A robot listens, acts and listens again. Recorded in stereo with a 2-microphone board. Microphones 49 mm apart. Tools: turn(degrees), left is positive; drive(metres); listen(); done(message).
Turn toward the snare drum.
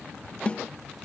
turn(degrees=25)
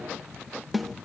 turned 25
done("Facing the snare drum.")